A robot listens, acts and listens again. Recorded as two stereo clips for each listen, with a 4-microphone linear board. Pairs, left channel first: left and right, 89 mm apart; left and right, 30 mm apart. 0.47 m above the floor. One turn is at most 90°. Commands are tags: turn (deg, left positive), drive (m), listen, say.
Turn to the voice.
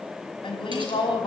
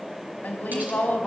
<turn deg="70"/>
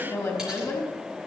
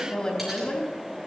<turn deg="35"/>
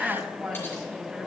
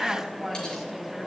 <say>Found it: a woman speaking, straight ahead, over 4 m away.</say>